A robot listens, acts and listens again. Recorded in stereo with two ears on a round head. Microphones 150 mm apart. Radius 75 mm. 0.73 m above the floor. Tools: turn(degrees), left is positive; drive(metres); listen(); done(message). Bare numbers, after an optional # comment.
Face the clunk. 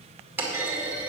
turn(-30)
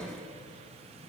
listen()
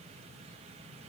done("I heard a clunk, but can't make it out now. It was about 15° left or 135° right.")